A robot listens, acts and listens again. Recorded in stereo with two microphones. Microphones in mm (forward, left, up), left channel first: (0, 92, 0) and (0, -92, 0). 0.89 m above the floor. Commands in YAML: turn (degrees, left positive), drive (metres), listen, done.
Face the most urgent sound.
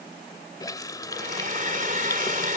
listen: true
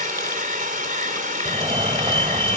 turn: -25
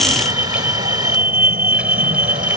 turn: -125
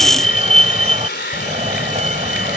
turn: -35
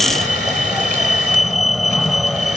done: "Found it: a fire alarm, straight ahead."